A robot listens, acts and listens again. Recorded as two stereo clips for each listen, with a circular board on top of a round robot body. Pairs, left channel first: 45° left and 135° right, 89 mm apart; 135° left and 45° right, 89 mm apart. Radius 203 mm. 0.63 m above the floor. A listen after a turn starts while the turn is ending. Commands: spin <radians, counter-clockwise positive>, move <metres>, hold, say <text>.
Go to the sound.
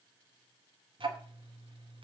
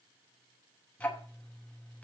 spin -2.62
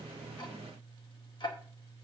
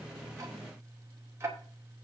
spin 0.26
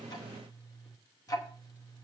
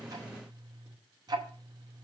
move 1.0
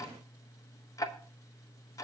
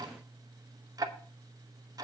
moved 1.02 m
move 1.0
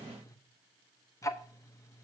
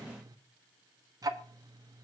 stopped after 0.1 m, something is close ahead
say I am next to the ticking.